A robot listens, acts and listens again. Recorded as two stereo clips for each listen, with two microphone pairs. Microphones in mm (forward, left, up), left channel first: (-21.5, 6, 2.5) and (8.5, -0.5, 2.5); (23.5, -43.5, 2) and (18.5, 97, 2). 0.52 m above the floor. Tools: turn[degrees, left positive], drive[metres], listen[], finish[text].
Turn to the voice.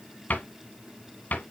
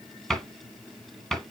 Action: listen[]
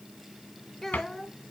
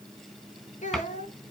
Thought: The child speaking: 115° right.
Action: turn[-115]
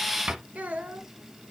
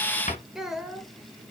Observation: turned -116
Action: finish[Facing the child speaking.]